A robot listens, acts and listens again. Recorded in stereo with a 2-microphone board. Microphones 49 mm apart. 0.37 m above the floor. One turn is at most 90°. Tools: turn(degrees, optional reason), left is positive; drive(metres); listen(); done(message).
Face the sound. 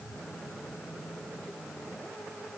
listen()
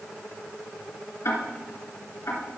turn(degrees=65, reason="The ticking: about 65° left or 115° left.")
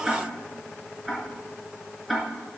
done("Found it: ticking, straight ahead.")